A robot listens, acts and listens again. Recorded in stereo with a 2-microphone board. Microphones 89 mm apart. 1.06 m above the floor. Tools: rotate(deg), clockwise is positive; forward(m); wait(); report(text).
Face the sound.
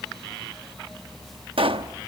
rotate(90)
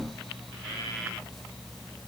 report("I heard a pop from this way, but can't make it out now.")